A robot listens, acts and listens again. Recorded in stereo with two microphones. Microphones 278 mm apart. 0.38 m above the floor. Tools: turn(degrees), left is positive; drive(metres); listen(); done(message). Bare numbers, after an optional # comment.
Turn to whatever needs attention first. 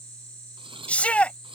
turn(30)
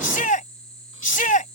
# So it is at 145° left.
turn(145)
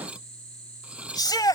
# The shout is now 15° left.
turn(15)
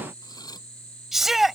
done("Facing the shout.")